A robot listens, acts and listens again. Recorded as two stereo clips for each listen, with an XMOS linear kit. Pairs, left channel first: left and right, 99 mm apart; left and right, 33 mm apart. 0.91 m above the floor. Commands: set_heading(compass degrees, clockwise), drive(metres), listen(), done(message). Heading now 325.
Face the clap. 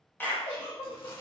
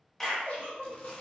set_heading(305)
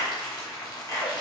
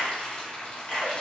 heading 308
set_heading(163)
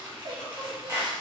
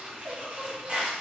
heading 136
set_heading(166)
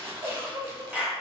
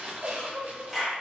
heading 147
set_heading(162)
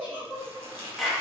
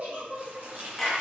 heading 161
done("Found it: a clap, straight ahead.")